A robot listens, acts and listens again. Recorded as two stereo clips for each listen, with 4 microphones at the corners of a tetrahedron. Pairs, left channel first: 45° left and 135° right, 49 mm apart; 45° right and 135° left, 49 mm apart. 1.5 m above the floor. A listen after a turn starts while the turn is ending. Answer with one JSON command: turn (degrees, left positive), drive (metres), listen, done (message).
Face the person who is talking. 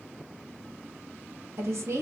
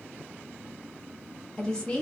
{"turn": -115}
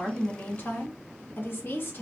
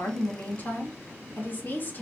{"done": "Facing the woman speaking, under 1 m away."}